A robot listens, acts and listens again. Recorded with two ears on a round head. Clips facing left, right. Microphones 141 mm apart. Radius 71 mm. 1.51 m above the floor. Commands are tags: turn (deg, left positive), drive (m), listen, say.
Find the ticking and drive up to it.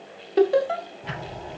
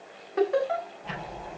<turn deg="90"/>
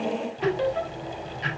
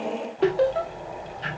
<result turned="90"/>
<turn deg="10"/>
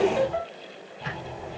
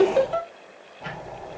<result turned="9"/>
<drive m="1.0"/>
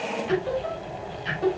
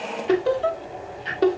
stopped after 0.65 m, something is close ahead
<say>Blocked. The ticking is further on, straight ahead.</say>